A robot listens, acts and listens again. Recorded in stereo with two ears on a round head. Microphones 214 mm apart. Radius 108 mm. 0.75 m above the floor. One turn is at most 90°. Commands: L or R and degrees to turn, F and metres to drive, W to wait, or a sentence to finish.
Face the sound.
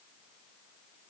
W
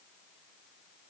W
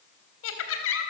L50
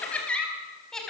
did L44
Found it: laughter, straight ahead.